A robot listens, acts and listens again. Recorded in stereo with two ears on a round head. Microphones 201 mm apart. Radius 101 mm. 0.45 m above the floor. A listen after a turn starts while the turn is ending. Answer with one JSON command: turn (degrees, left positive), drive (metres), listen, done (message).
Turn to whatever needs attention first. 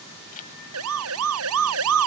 {"turn": -70}
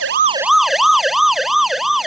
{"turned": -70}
{"done": "Found it: a siren, straight ahead."}